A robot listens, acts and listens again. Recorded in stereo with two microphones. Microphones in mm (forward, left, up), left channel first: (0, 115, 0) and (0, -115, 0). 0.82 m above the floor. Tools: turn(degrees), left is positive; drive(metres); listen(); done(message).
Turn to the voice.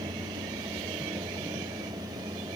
listen()
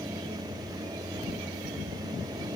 listen()
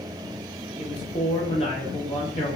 turn(degrees=25)
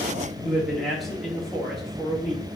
done("Found it: a man speaking, straight ahead, 1 to 2 m away.")